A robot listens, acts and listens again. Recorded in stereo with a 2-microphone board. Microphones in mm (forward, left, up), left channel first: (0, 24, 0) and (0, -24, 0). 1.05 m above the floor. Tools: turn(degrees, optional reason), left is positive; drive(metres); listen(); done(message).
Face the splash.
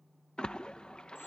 turn(degrees=20, reason="The splash: about 20° left or 160° left.")
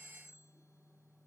listen()
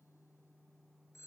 done("I heard a splash, but can't make it out now. It was about straight ahead or 140° left.")